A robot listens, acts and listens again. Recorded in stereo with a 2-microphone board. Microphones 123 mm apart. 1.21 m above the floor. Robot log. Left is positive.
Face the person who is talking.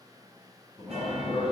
note: The man speaking: about 40° left or 140° left.
cmd yaw +40
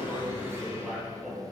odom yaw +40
end: Facing the man speaking, under 1 m away.